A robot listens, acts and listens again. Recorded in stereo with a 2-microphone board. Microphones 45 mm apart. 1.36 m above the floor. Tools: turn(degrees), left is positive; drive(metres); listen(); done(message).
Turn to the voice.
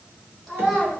turn(degrees=-30)
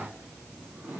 listen()
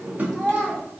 turn(degrees=30)
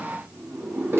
listen()
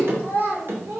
turn(degrees=-50)
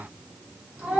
turn(degrees=-30)
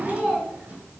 turn(degrees=-15)
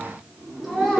done("Found it: a child speaking, straight ahead.")